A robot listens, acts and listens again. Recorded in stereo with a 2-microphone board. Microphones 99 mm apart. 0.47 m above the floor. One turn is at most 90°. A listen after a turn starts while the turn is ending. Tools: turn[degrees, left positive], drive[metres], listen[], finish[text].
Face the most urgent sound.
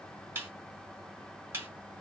Action: listen[]
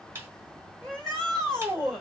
Action: turn[30]
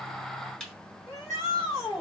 Thought: So it is at 145° left.
Action: turn[90]
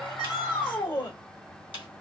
Thought: The shout is now 70° left.
Action: turn[70]
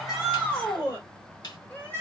Thought: The shout is now 20° left.
Action: turn[20]
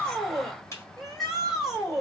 Action: finish[Facing the shout, 2 to 4 m away.]